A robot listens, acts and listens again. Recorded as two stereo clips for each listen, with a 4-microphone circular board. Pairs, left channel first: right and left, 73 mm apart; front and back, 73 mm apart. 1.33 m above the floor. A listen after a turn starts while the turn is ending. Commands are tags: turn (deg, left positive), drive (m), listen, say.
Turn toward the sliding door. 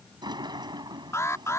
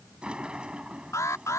<turn deg="105"/>
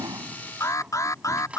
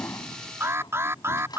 <turn deg="15"/>
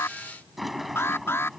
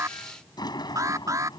<say>Found it: a sliding door, straight ahead.</say>